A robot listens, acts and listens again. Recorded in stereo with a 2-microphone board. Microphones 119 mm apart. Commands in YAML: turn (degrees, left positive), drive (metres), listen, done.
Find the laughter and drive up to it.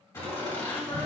turn: 30
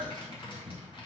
drive: 1.0
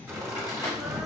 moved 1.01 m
drive: 1.0
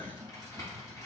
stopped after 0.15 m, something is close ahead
done: "I am next to the laughter."